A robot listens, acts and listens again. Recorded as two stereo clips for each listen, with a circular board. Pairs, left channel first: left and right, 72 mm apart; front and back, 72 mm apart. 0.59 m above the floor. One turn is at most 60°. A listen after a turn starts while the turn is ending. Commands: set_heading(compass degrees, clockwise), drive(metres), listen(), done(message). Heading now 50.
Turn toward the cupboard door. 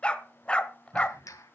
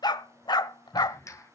set_heading(105)
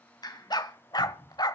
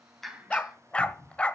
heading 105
done("Found it: a cupboard door, straight ahead.")